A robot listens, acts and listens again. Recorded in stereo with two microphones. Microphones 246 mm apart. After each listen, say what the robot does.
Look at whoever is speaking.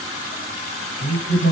Turn 50° left.
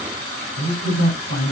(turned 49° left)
Turn 75° left.
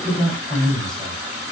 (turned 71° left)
Found it: a man speaking, straight ahead.